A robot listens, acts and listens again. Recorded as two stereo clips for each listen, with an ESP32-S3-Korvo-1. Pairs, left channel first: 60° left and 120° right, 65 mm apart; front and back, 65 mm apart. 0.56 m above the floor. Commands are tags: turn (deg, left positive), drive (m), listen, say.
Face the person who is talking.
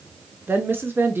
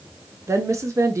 <turn deg="-165"/>
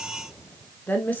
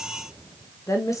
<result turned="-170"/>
<say>Facing the woman speaking.</say>